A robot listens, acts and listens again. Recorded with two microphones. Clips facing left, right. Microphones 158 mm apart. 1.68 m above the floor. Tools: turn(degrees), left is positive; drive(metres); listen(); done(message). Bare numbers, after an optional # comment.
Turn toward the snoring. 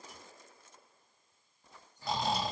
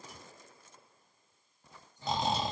# The snoring: about 20° right or 160° right.
turn(-20)
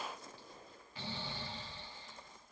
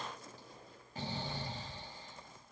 # So it is at 140° right.
turn(-140)
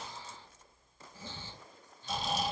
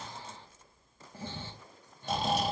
# The snoring is now 55° right.
turn(-55)
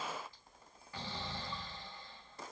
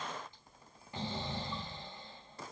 # The snoring is now 20° right.
turn(-20)
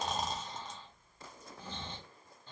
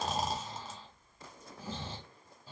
done("Facing the snoring, 1 to 2 m away.")